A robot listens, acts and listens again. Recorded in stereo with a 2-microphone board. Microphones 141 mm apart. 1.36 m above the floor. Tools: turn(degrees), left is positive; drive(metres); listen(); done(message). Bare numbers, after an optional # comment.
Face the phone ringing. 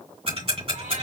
listen()
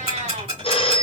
# The phone ringing: about 40° left or 140° left.
turn(40)
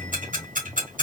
listen()
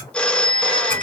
# So it is at 10° left.
turn(10)
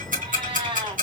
listen()
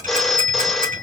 done("Facing the phone ringing, under 1 m away.")